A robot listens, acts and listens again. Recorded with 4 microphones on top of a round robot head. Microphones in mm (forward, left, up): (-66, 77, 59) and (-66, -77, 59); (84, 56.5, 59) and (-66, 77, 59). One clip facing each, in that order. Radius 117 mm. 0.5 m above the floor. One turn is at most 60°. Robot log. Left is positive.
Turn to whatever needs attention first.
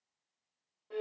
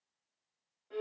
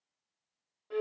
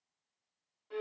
cmd idle
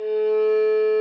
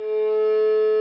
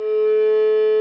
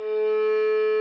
cmd idle
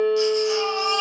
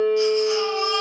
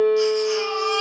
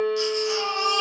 note: The baby crying: 130° left.
cmd yaw +60
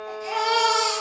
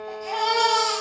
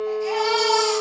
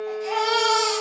note: The baby crying is now 70° left.
cmd yaw +60
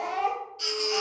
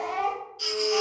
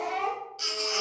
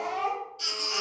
end: Facing the baby crying.